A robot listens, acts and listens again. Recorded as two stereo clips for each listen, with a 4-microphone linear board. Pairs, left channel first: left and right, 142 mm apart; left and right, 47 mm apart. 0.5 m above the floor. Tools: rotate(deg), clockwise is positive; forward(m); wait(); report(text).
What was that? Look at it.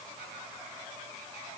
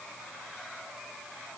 wait()
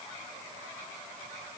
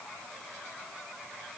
wait()
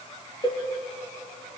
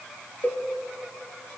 rotate(-35)
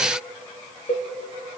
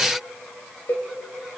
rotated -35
rotate(-105)
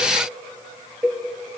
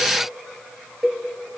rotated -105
rotate(10)
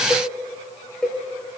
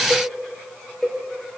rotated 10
report("Facing the cowbell, 1 to 2 m away.")